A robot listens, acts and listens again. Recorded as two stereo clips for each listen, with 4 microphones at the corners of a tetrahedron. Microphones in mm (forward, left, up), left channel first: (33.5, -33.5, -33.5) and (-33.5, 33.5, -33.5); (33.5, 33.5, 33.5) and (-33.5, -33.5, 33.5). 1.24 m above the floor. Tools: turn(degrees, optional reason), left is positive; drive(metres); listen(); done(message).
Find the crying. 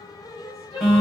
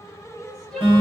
turn(degrees=-40, reason="The crying: 40° right.")
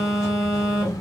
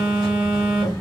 listen()
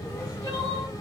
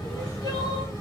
listen()
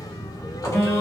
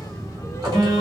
done("Facing where the crying came from. I can't hear it now.")